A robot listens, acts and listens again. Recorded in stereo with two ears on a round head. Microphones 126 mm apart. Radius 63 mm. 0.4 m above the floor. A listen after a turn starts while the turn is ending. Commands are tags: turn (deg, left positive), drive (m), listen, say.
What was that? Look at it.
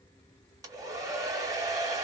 <turn deg="-25"/>
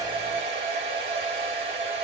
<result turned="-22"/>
<turn deg="-130"/>
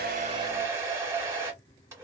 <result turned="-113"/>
<turn deg="-20"/>
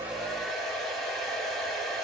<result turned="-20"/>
<say>Facing the hair dryer, under 1 m away.</say>